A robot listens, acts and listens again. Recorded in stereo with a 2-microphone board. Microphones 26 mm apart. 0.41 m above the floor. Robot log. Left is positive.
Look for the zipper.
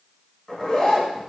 note: The zipper: about 30° left or 150° left.
cmd yaw +30
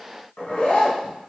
note: So it is at 120° left.
cmd yaw +120
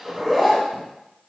end: Found it: a zipper, straight ahead, 1 to 2 m away.